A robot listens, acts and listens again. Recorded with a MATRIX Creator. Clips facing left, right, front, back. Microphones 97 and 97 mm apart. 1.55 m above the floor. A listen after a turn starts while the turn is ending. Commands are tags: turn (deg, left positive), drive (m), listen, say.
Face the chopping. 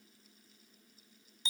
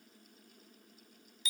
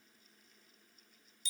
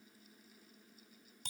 <listen/>
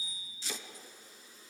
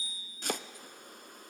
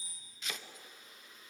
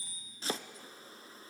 <turn deg="-125"/>
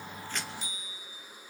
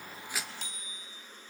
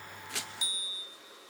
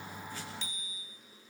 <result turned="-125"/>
<listen/>
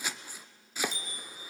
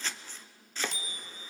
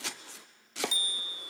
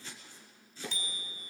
<turn deg="10"/>
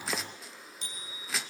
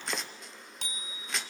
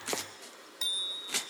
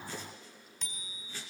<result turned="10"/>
<say>Facing the chopping, under 1 m away.</say>